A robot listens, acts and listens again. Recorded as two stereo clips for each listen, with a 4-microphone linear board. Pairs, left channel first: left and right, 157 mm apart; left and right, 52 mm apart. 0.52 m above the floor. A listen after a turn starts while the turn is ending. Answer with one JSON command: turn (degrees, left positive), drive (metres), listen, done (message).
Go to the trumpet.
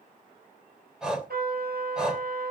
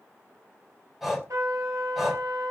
{"turn": -90}
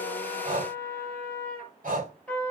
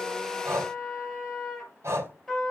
{"turn": 10}
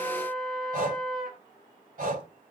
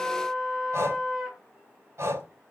{"drive": 1.0}
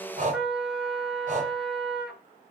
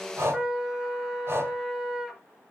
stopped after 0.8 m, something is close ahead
{"done": "Blocked. The trumpet is further on, straight ahead."}